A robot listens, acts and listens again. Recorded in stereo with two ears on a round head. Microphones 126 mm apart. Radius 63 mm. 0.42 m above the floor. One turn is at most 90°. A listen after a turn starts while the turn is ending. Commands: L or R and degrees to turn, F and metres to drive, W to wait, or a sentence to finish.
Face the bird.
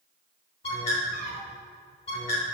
L45
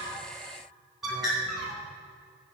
Facing the bird, 2 to 4 m away.